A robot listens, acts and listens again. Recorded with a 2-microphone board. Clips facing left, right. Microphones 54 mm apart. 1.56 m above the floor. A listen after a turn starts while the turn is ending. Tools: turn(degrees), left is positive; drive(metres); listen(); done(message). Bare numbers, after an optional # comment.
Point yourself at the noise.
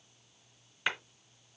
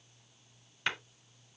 turn(30)
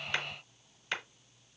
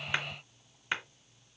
# So it is at 25° right.
turn(-25)
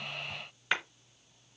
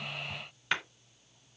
done("Facing the clap, 2 to 4 m away.")